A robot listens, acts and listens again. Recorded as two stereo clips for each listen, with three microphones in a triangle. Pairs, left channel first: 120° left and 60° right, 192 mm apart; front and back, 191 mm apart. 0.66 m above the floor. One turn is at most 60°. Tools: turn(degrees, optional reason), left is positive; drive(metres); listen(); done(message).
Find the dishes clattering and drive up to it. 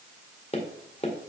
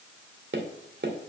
listen()
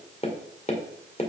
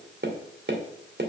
listen()
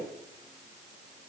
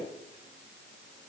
done("I can't make out dishes clattering, only tapping.")